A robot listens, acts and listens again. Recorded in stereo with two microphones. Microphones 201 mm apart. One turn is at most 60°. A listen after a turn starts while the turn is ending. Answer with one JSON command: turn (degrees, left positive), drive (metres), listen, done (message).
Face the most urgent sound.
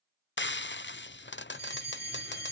{"turn": -55}
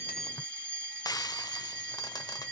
{"turn": -60}
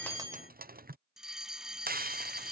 {"done": "Found it: a fire alarm, straight ahead."}